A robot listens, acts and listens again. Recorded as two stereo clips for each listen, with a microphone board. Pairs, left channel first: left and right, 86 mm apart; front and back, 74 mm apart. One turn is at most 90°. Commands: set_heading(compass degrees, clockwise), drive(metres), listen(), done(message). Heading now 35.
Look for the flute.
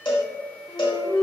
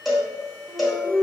set_heading(350)
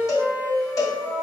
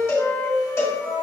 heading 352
done("Facing the flute, 1 to 2 m away.")